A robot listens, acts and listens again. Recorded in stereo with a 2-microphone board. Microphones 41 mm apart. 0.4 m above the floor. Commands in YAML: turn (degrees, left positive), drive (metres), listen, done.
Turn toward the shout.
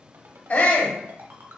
turn: 60
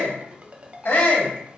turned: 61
turn: 45
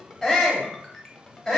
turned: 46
done: "Facing the shout."